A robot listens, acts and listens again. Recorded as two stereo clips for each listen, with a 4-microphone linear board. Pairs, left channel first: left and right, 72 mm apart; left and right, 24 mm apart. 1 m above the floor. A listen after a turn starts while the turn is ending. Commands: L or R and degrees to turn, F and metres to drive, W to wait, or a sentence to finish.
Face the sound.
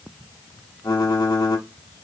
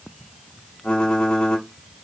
L60
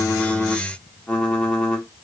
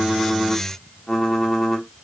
L15
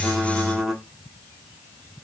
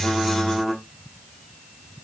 Found it: typing on a keyboard, straight ahead, under 1 m away.